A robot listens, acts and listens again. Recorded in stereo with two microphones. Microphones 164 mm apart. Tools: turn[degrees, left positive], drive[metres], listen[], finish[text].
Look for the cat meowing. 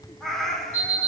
Action: turn[30]
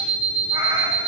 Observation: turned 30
Action: listen[]
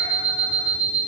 Action: listen[]
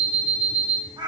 Thought: So it is at 25° right.
Action: turn[-25]
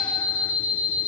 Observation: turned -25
Action: listen[]
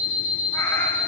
Action: listen[]
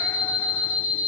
Action: finish[Facing where the cat meowing came from. I can't hear it now.]